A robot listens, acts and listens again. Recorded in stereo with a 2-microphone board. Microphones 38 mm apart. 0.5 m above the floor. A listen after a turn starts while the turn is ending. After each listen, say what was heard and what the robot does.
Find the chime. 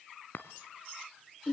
The chime: about 55° left or 125° left. Turn 55° left.
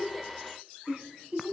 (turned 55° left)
Keep listening.
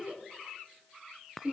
Facing the chime, 1 to 2 m away.